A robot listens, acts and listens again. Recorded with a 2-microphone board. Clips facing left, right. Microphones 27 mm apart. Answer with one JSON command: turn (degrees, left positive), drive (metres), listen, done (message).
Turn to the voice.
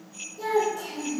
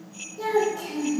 {"turn": -20}
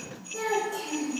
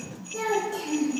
{"done": "Found it: a child speaking, straight ahead, 1 to 2 m away."}